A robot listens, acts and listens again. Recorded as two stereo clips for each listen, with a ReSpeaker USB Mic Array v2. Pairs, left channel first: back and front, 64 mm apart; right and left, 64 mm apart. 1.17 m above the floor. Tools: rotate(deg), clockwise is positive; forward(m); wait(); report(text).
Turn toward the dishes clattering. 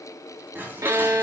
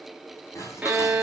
rotate(60)
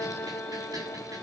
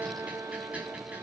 wait()
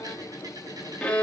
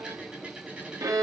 rotate(-20)
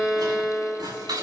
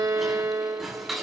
report("Facing the dishes clattering, over 4 m away.")